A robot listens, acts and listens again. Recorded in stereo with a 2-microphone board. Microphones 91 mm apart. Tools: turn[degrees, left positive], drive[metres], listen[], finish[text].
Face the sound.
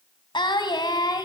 Thought: The singing: about 50° left or 130° left.
Action: turn[50]
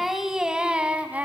Thought: So it is at 20° right.
Action: turn[-20]
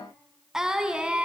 Thought: The singing is now 10° right.
Action: turn[-10]
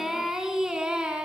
Thought: The singing is now 10° right.
Action: turn[-10]
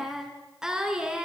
Thought: The singing is now 10° right.
Action: turn[-10]
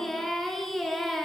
Action: finish[Found it: singing, straight ahead, 2 to 4 m away.]